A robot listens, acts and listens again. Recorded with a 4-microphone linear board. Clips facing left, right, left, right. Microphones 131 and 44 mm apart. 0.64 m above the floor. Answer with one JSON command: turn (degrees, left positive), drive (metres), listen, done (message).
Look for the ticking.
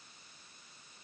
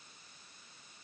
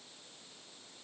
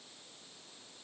{"listen": true}
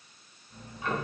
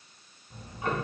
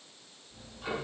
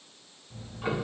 {"turn": -35}
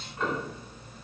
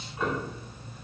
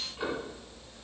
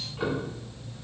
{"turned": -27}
{"turn": -10}
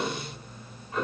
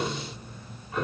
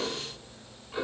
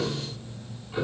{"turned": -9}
{"done": "Found it: ticking, straight ahead, 1 to 2 m away."}